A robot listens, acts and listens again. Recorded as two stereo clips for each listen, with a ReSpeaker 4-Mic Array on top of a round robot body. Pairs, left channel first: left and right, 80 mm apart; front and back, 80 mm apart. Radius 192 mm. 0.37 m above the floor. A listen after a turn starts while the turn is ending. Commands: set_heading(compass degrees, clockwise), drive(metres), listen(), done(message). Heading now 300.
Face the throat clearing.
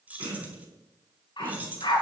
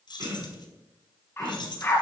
set_heading(80)
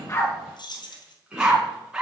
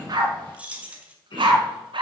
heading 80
set_heading(95)
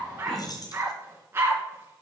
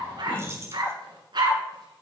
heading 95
listen()
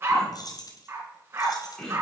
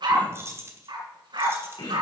done("Facing the throat clearing.")